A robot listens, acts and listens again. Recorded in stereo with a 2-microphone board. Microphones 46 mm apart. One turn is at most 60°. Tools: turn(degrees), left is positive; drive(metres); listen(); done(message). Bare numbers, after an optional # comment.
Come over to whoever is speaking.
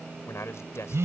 turn(60)
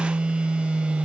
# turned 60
# Nothing new. It was at 30° left.
turn(30)
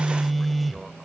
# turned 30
listen()
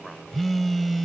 done("I heard a man speaking from this way, but can't make it out now. I did not reach it.")